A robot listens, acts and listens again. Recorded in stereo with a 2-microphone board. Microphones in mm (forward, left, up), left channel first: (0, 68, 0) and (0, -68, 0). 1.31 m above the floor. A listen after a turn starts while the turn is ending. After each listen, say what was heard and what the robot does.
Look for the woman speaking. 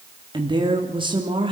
The woman speaking: about 40° right or 140° right. Turn 40° right.
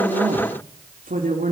So it is at 100° right. Turn 100° right.
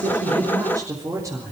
The woman speaking is now 25° right. Turn 25° right.
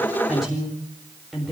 Facing the woman speaking.